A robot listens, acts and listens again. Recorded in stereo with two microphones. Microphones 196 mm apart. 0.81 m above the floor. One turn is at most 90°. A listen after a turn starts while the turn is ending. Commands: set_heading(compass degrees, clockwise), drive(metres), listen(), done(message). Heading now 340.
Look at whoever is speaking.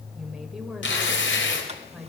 set_heading(310)
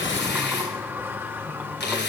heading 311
listen()
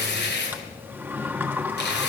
listen()
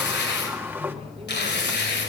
done("I heard a woman speaking, but can't make it out now. It was about 30° right or 155° left.")